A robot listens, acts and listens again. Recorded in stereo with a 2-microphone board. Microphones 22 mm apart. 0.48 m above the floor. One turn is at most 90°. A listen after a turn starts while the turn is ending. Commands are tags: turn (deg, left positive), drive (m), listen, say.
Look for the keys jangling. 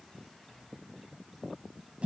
<listen/>
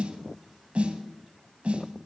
<listen/>
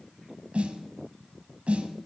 <say>I can't make out keys jangling to turn to.</say>